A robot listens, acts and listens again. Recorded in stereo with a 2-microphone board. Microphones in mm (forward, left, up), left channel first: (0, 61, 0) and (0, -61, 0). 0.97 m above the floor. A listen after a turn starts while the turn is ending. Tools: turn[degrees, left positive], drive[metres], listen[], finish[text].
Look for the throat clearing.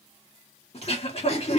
Thought: The throat clearing: about 55° left or 125° left.
Action: turn[55]
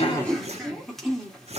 Action: finish[Found it: throat clearing, straight ahead, 2 to 4 m away.]